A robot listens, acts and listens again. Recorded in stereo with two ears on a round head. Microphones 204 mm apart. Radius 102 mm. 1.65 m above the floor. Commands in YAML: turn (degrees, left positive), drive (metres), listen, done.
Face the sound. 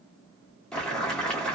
turn: 30
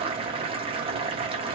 turn: -25
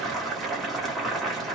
done: "Found it: boiling, straight ahead."